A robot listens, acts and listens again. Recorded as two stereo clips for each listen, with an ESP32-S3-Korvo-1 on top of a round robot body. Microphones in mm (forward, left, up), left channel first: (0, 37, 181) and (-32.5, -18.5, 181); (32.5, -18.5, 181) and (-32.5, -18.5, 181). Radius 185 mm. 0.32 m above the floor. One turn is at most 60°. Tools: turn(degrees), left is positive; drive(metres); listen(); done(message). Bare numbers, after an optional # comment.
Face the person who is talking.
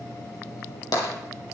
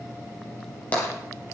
listen()
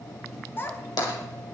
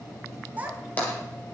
# The child speaking: 115° left.
turn(60)
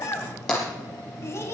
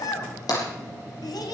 # The child speaking is now 10° left.
turn(10)
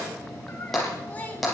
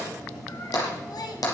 listen()
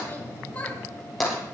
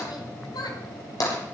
done("Found it: a child speaking, straight ahead.")